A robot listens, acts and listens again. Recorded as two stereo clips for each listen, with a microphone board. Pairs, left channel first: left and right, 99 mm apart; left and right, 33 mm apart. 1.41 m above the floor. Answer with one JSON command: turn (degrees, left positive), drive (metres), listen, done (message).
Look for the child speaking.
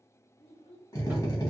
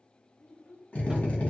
{"turn": 65}
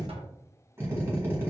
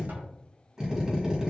{"listen": true}
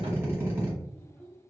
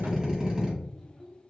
{"turn": 15}
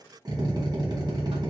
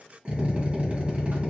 {"listen": true}
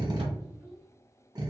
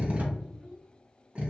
{"listen": true}
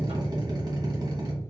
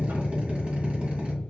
{"done": "Facing where the child speaking came from. I can't hear it now."}